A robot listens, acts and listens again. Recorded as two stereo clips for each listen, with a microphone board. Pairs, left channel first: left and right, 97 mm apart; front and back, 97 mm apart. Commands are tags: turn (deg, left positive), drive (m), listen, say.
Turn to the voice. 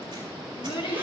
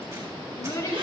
<turn deg="60"/>
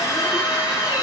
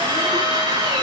<listen/>
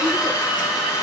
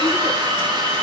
<listen/>
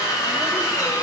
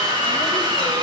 <say>Facing where the child speaking came from. I can't hear it now.</say>